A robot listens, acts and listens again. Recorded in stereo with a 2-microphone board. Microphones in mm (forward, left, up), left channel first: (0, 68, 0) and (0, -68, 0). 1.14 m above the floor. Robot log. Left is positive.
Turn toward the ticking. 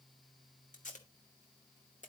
cmd idle
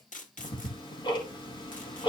note: The ticking: about 35° left or 145° left.
cmd yaw +35
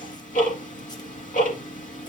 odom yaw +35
note: So it is at 105° left.
cmd yaw +105
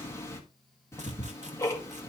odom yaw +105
note: The ticking is now 20° left.
cmd yaw +20
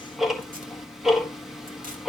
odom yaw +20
end: Found it: ticking, straight ahead, 1 to 2 m away.